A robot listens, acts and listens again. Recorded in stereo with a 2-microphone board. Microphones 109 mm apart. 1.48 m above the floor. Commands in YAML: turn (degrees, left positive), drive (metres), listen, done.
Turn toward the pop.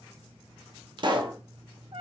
turn: -45
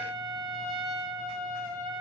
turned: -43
listen: true
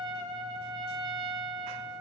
done: "I heard a pop, but can't make it out now. It was about straight ahead or 95° right."